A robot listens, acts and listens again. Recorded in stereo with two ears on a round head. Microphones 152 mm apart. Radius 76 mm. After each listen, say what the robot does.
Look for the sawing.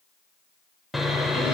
Turn 30° left.
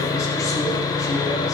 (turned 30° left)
Turn 150° left.
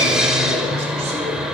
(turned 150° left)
Facing the sawing.